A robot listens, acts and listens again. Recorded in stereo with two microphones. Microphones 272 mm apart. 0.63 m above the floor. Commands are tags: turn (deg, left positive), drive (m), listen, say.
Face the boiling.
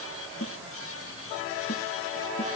<listen/>
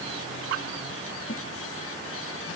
<listen/>
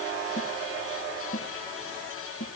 <say>I can't make out boiling, only a snare drum.</say>